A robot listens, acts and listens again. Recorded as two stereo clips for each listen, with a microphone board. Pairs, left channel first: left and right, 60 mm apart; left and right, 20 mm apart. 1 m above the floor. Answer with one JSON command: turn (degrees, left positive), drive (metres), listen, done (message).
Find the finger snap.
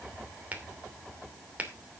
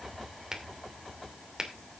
{"turn": -25}
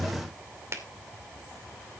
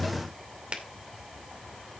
{"turn": -130}
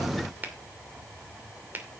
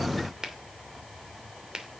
{"turn": -30}
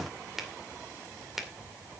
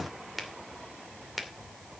{"done": "Found it: a finger snap, straight ahead."}